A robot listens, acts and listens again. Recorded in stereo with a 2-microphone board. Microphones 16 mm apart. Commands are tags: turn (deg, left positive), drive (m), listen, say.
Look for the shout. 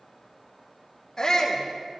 <turn deg="40"/>
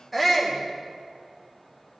<say>Found it: a shout, straight ahead.</say>